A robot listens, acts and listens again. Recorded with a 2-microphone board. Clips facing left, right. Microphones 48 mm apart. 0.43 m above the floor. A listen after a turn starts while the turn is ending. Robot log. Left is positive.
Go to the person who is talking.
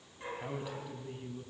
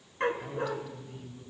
note: The man speaking: about 15° left or 165° left.
cmd yaw +15
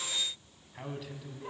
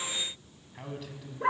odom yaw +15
cmd fwd 1.0
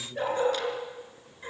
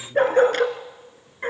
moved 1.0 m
cmd fwd 1.0
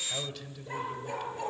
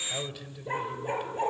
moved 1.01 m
note: The man speaking is now 10° right.
cmd yaw -10
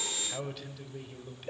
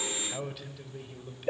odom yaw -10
cmd fwd 1.0
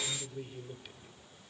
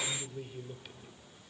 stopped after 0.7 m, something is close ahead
end: Arrived at the man speaking, straight ahead.